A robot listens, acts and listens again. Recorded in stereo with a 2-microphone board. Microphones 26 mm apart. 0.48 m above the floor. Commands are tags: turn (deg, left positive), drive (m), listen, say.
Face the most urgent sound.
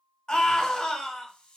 <turn deg="35"/>
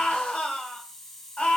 <turn deg="105"/>
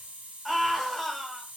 <say>Facing the scream, 1 to 2 m away.</say>